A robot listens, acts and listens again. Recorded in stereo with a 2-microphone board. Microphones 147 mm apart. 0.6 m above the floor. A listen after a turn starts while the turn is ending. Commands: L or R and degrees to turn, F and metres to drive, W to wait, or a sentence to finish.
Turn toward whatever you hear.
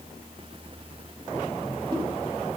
W
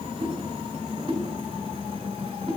R35
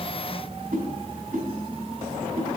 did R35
R105
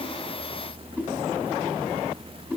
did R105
R10
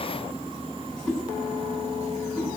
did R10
Facing the whoosh.